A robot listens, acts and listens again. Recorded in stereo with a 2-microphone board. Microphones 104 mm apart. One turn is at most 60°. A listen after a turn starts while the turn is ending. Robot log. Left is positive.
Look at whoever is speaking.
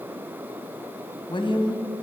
note: The woman speaking: about 55° left or 125° left.
cmd yaw +55
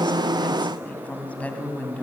note: So it is at 15° left.
cmd yaw +15
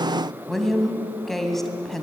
end: Facing the woman speaking.